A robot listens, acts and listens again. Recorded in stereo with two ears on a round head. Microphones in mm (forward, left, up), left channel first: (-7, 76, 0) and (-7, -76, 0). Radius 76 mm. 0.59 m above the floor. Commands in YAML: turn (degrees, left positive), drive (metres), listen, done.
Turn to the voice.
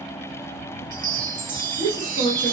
turn: -45
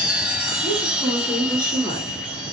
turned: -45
turn: -10
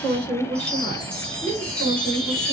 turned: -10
turn: 25
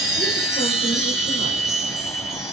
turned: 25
listen: true
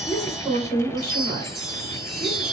turn: 20
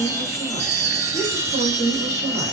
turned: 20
done: "Facing the woman speaking, 1 to 2 m away."